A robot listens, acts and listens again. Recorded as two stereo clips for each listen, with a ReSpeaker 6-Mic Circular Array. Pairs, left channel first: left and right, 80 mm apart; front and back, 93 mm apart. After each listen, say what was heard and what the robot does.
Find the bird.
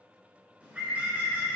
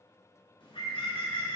The bird: 20° right. Turn 20° right.
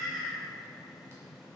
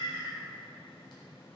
Found it: a bird, straight ahead.